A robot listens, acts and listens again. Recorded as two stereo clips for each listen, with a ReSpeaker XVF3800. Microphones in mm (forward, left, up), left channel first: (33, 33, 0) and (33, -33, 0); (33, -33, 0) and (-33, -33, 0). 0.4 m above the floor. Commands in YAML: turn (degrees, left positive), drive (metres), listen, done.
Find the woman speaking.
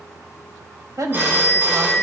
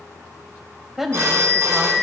turn: -95
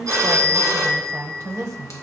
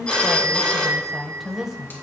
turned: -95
turn: -100
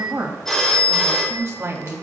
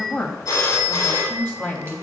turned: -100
turn: -55
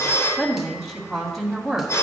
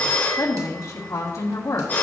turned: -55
done: "Facing the woman speaking."